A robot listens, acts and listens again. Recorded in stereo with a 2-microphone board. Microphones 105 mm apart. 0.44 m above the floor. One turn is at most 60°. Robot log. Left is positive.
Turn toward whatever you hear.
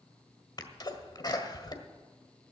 note: The sneeze: about 40° left or 140° left.
cmd yaw +40
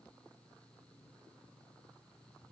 cmd idle
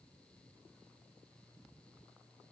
end: I heard a sneeze, but can't make it out now. It was about straight ahead or 100° left.